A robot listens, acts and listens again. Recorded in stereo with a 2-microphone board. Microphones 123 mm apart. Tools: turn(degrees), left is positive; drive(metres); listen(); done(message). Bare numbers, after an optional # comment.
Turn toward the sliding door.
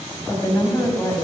listen()
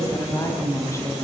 listen()
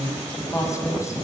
done("I can't make out a sliding door, only a woman speaking.")